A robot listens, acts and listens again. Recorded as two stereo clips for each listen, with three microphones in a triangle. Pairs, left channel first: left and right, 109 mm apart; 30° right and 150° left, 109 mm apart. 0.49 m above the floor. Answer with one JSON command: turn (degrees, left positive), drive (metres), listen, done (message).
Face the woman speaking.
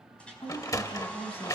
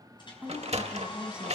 {"turn": 70}
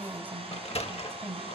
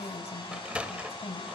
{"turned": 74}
{"turn": -25}
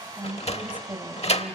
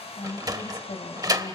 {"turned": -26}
{"turn": -20}
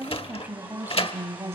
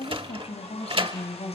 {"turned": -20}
{"turn": -25}
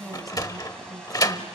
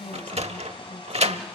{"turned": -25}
{"done": "Facing the woman speaking, 2 to 4 m away."}